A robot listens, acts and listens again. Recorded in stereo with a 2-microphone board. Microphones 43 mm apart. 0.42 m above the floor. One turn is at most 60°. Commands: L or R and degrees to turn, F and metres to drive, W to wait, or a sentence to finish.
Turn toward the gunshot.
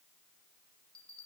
W
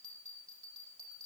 W
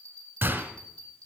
R45
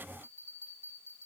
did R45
W
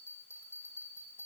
I heard a gunshot, but can't make it out now. It was about straight ahead or 90° right.